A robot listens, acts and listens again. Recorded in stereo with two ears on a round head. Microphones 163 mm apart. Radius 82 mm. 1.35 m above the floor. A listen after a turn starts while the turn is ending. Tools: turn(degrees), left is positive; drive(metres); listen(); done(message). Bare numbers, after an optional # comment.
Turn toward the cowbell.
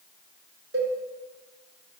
# The cowbell: about 65° right or 115° right.
turn(-65)
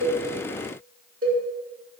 # So it is at 50° right.
turn(-50)
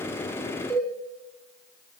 done("Found it: a cowbell, straight ahead, 2 to 4 m away.")